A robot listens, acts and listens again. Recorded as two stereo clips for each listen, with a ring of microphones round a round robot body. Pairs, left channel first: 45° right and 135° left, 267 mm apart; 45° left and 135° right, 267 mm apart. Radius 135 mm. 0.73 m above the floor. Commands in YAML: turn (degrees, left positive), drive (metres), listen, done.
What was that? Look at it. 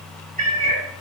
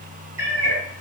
turn: 170
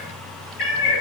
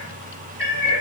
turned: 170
turn: -35
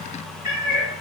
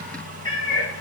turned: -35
turn: -35
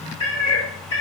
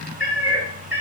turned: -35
turn: -15
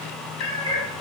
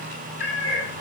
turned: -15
done: "Facing the cat meowing, 1 to 2 m away."